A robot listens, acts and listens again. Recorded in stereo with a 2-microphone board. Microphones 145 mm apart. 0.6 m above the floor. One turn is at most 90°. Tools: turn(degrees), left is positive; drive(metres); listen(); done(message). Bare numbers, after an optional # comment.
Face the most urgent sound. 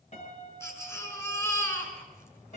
# The baby crying: about 20° left or 160° left.
turn(20)
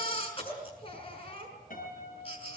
# So it is at 140° left.
turn(90)
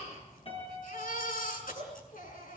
# The baby crying is now 70° left.
turn(70)
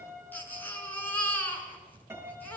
# The baby crying is now 10° left.
turn(10)
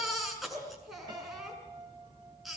done("Facing the baby crying.")